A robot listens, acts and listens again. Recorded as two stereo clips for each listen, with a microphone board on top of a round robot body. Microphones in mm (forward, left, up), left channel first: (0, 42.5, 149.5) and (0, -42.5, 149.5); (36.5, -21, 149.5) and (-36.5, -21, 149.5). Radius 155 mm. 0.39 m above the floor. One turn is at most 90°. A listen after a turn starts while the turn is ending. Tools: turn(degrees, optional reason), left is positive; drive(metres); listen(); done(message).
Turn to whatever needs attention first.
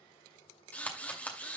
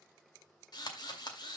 listen()
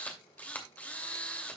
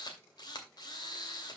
listen()
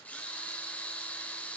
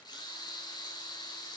done("I can't make out anything urgent to turn to.")